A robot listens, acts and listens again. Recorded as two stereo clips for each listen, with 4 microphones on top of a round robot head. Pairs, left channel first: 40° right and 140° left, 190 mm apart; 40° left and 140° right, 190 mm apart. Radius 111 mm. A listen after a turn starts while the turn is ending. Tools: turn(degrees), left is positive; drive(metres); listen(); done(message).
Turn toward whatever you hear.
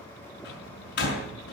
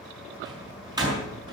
turn(degrees=-70)
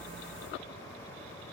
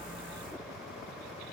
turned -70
done("Facing where the door slam came from. I can't hear it now.")